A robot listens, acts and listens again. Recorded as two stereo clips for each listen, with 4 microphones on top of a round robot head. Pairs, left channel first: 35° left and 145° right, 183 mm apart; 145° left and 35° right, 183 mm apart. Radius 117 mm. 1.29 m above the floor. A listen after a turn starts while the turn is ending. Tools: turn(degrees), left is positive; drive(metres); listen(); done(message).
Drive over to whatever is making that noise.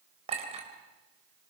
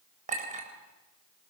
turn(degrees=-85)
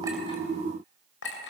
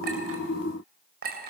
drive(metres=1.0)
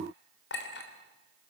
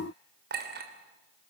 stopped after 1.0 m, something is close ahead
done("Something is in my way. I am facing the clink but have not reached it.")